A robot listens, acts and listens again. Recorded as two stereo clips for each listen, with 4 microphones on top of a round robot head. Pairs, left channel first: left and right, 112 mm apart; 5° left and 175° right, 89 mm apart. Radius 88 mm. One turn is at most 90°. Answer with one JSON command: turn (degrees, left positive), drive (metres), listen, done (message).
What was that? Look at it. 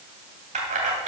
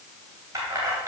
{"turn": -90}
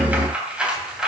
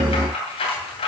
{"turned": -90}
{"done": "Facing the keys jangling."}